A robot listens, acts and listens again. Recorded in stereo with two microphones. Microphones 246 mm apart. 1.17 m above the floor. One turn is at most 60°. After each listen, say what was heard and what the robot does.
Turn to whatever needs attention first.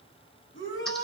The shout: about 55° left or 125° left. Turn 55° left.
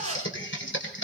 Keep listening.
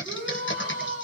So it is at 75° left. Turn 60° left.
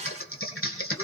Nothing new. It was at 15° left. Turn 15° left.
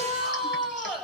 Facing the shout, over 4 m away.